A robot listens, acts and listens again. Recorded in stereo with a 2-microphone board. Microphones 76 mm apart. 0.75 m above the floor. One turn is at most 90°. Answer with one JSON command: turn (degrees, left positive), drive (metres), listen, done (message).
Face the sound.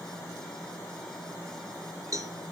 {"turn": -45}
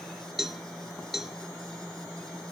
{"done": "Found it: a cowbell, straight ahead."}